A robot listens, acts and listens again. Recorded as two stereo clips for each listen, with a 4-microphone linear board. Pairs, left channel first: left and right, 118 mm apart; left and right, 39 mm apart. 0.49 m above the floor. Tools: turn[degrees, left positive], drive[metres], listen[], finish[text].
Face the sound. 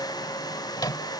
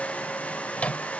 Thought: The microwave: about 35° left or 145° left.
Action: turn[35]
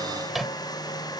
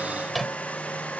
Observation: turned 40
Action: finish[Facing the microwave.]